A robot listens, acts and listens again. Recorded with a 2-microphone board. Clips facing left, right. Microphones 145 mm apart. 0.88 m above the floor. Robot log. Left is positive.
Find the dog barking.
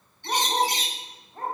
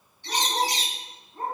cmd yaw +90
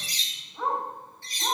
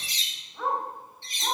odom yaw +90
note: So it is at 10° right.
cmd yaw -10
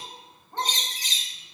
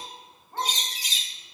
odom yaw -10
end: Found it: a dog barking, straight ahead, 2 to 4 m away.